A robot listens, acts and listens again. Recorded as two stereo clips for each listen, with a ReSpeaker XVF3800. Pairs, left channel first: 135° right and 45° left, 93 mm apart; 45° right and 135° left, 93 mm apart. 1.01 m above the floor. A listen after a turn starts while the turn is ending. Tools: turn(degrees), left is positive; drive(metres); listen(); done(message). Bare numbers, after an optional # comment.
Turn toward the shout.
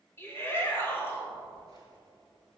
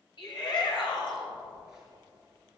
# The shout: 75° right.
turn(-75)
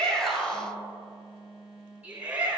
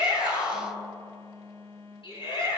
# The shout is now 30° right.
turn(-30)
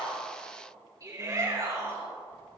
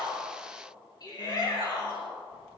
done("Found it: a shout, straight ahead, over 4 m away.")